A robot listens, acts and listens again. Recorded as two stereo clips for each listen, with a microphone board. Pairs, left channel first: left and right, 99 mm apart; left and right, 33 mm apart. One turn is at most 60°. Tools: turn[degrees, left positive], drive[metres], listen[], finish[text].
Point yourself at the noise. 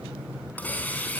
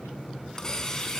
Thought: The hiss: about 15° left or 165° left.
Action: turn[15]
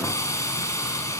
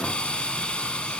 Thought: So it is at 145° left.
Action: turn[60]
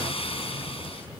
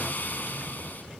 Thought: The hiss is now 85° left.
Action: turn[60]
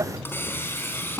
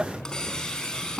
Thought: The hiss is now 25° left.
Action: turn[25]
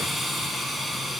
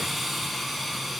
Action: finish[Found it: a hiss, straight ahead.]